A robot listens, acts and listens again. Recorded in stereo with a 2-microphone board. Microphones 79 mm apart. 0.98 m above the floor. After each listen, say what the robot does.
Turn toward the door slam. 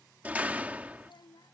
Turn 20° right.
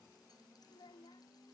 Keep listening.
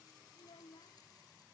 I heard a door slam, but can't make it out now. It was about straight ahead or 140° right.